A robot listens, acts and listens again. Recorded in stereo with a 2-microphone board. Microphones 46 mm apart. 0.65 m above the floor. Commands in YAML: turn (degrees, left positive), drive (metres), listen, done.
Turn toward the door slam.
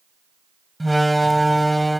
turn: 30
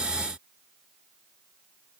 listen: true
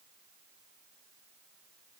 done: "I heard a door slam, but can't make it out now. It was about 30° right or 150° left."